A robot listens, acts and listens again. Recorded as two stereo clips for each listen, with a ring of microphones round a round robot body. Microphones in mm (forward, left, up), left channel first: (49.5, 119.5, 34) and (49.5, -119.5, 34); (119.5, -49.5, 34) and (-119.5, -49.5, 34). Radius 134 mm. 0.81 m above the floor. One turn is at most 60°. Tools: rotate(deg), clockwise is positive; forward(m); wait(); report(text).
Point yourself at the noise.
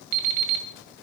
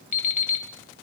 rotate(60)
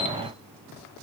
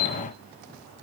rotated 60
report("Facing the alarm clock.")